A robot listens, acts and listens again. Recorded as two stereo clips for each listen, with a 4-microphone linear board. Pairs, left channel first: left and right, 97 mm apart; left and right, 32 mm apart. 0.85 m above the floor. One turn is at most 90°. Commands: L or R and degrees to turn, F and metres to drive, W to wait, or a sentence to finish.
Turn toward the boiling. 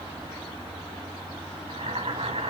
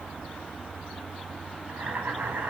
R90
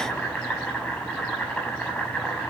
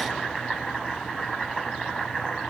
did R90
Found it: boiling, straight ahead, over 4 m away.